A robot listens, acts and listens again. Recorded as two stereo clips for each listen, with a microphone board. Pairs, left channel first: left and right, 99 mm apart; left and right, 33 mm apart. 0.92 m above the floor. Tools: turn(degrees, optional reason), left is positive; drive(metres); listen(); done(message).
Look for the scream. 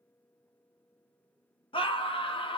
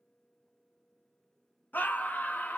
turn(degrees=60, reason="The scream: about 60° left or 120° left.")
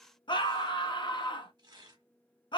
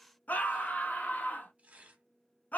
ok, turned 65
turn(degrees=55, reason="So it is at 55° left.")
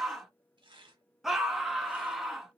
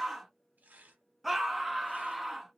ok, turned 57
done("Facing the scream, under 1 m away.")